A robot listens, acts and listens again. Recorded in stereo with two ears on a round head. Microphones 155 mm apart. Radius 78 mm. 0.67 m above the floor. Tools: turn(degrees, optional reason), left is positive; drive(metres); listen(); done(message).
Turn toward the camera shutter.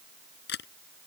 turn(degrees=75, reason="The camera shutter: about 75° left or 105° left.")
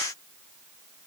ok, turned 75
listen()
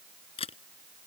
turn(degrees=35, reason="So it is at 35° left.")
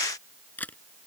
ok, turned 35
turn(degrees=10, reason="The camera shutter is now 10° left.")
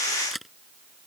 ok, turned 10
done("Facing the camera shutter.")